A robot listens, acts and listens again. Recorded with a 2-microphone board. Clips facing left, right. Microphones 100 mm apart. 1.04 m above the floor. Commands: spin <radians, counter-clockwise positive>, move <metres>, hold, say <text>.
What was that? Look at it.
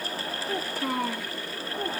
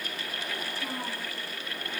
spin 1.57
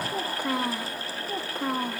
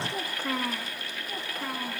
spin 0.70
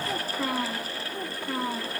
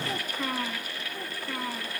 spin 0.44
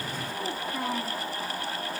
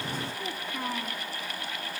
spin 0.17
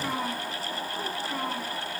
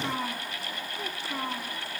say Facing the child speaking.